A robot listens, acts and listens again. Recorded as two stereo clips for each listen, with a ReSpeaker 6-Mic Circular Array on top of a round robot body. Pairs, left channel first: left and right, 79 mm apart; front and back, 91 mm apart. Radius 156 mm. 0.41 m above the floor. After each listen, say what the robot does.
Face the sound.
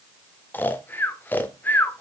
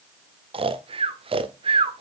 Turn 160° left.
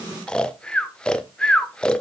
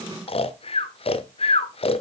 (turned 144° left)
Turn 10° left.
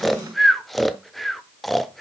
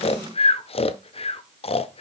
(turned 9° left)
Found it: snoring, straight ahead, under 1 m away.